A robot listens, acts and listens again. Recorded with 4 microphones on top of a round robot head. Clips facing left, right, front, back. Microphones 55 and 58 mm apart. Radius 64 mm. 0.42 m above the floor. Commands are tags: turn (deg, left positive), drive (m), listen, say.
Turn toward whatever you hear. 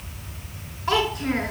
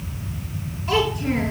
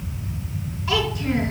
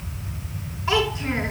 <turn deg="120"/>
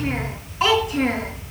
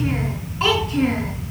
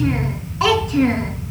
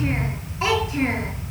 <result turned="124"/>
<turn deg="10"/>
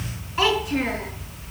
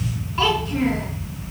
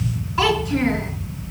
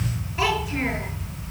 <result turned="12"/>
<turn deg="10"/>
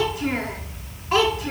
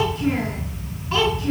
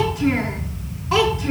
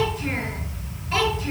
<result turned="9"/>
<turn deg="20"/>
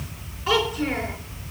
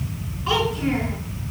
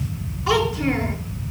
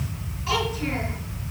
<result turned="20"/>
<say>Found it: a child speaking, straight ahead.</say>